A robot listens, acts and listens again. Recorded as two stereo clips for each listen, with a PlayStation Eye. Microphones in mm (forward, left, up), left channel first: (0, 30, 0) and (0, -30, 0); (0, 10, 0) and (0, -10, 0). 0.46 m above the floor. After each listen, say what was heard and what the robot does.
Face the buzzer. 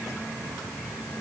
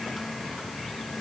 Keep listening.
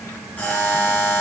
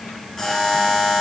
The buzzer: about 30° left or 150° left. Turn 30° left.
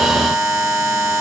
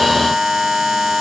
Facing the buzzer.